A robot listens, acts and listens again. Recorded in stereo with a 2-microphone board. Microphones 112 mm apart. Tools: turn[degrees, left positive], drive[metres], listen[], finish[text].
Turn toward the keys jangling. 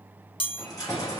Thought: The keys jangling: about 30° left or 150° left.
Action: turn[30]
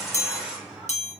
Thought: So it is at 10° right.
Action: turn[-10]
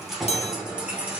Thought: The keys jangling is now 15° right.
Action: turn[-15]
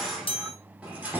Thought: The keys jangling is now 15° right.
Action: turn[-15]
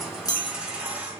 Thought: The keys jangling is now 15° right.
Action: turn[-15]
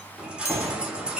Thought: The keys jangling is now 10° right.
Action: turn[-10]
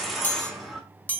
Action: finish[Found it: keys jangling, straight ahead, 1 to 2 m away.]